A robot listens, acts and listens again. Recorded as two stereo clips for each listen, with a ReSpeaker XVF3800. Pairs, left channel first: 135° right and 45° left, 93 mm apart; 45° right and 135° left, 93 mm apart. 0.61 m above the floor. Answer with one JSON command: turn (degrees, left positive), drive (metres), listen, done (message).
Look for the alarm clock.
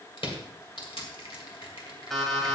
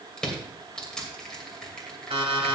{"turn": 140}
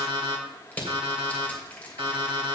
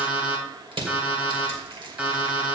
{"turn": 60}
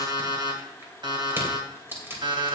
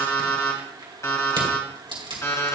{"turn": 15}
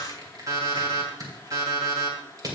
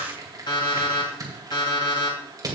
{"done": "Facing the alarm clock."}